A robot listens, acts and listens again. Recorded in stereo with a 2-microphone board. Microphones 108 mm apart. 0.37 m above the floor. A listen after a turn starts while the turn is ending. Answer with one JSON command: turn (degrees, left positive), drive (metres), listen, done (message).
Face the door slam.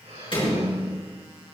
{"turn": 50}
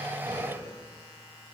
{"listen": true}
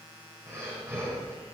{"done": "I heard a door slam, but can't make it out now. It was about straight ahead or 80° left."}